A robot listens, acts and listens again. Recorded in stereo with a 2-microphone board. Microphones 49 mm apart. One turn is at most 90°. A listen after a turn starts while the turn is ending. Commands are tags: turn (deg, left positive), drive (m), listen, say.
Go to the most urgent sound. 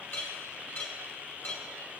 <listen/>
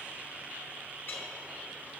<listen/>
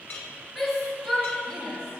<turn deg="30"/>
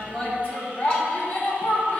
<turn deg="90"/>
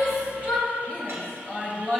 <turn deg="25"/>
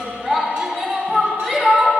<turn deg="15"/>
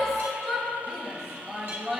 <drive m="1.0"/>
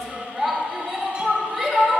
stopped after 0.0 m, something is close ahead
<say>Something is in my way. I am facing the shout but have not reached it.</say>